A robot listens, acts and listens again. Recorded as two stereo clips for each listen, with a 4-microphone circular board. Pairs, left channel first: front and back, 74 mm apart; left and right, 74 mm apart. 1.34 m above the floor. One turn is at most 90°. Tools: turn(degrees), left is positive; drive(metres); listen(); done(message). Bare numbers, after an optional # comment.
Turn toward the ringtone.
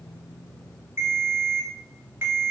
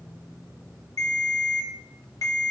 # The ringtone: 125° left.
turn(90)
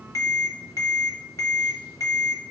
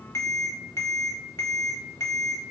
# The ringtone is now 40° left.
turn(40)
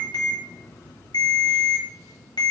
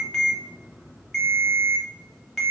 done("Facing the ringtone, under 1 m away.")